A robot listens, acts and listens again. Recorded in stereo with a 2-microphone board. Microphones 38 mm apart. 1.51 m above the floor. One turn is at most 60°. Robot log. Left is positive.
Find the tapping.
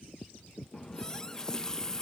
cmd idle
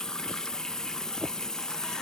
cmd idle
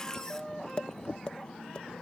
note: The tapping: about 25° left or 155° left.
cmd yaw +25
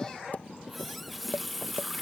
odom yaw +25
note: So it is at 135° left.
cmd yaw +60
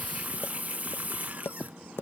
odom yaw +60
note: The tapping is now 80° left.
cmd yaw +60
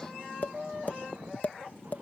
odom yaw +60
note: The tapping is now 45° left.
cmd yaw +45
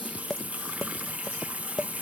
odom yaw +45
note: The tapping is now 10° left.
cmd yaw +10
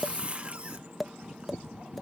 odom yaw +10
end: Facing the tapping.